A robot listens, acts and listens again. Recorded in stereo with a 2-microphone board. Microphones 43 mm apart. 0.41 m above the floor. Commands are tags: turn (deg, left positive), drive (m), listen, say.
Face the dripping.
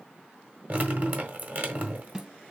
<turn deg="-45"/>
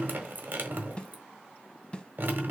<turn deg="-80"/>
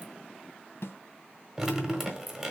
<turn deg="-10"/>
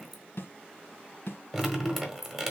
<say>Facing the dripping, 1 to 2 m away.</say>